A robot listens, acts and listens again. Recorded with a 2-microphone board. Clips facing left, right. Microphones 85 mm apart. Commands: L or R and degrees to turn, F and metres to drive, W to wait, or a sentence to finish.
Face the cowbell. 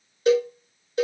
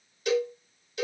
L40
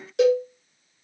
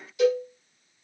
L95
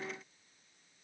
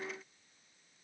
W
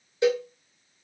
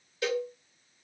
L20
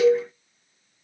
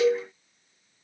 Facing the cowbell.